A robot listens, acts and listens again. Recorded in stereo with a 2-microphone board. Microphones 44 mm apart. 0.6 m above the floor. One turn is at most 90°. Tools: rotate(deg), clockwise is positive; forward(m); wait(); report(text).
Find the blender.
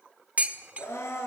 rotate(-90)
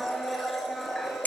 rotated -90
report("Found it: a blender, straight ahead, over 4 m away.")